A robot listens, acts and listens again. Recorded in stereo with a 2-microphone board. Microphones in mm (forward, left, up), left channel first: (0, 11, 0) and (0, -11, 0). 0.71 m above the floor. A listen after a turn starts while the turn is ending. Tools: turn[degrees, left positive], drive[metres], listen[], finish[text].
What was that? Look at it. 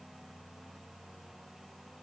Action: listen[]
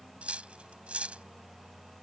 Thought: The cutlery clinking: about 75° right or 105° right.
Action: turn[-75]
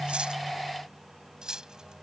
Thought: So it is at 30° right.
Action: turn[-30]
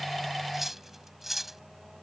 Thought: The cutlery clinking is now 10° right.
Action: turn[-10]
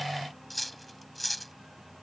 Action: finish[Found it: cutlery clinking, straight ahead.]